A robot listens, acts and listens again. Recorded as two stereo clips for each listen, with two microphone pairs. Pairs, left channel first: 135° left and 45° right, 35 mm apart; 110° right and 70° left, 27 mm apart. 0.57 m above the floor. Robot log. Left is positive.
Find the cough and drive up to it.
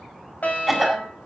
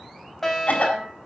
note: The cough: 135° right.
cmd yaw -135
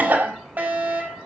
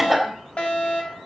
note: The cough is now 20° right.
cmd yaw -20
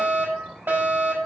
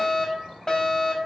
cmd idle
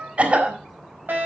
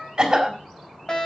cmd fwd 1.0
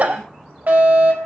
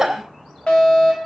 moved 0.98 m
cmd fwd 1.0
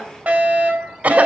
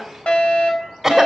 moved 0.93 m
note: The cough is now 10° right.
cmd yaw -10
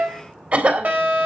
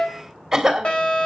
cmd fwd 1.0
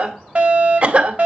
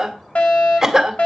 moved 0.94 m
note: The cough is now 10° right.
cmd yaw -10
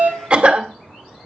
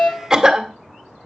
cmd fwd 1.0
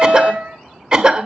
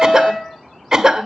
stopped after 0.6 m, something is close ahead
end: Arrived at the cough, straight ahead.